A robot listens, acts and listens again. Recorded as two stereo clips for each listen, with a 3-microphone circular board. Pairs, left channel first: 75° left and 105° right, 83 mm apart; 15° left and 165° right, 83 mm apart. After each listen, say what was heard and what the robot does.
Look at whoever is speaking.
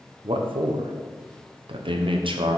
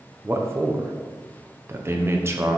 The man speaking: 105° right. Turn 105° right.
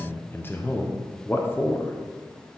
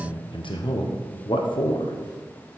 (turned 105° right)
The man speaking is now 10° left. Turn 10° left.
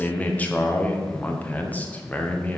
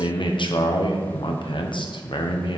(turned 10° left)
Found it: a man speaking, straight ahead.